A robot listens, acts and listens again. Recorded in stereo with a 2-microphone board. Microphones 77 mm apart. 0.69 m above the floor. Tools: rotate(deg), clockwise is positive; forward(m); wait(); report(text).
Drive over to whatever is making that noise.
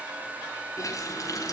rotate(-45)
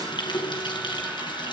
rotate(-90)
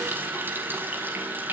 rotate(25)
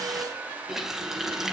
forward(1.0)
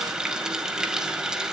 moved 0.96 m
rotate(10)
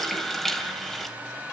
forward(1.0)
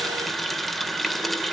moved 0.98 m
forward(1.0)
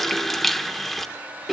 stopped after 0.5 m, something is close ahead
report("Arrived at the running tap, straight ahead.")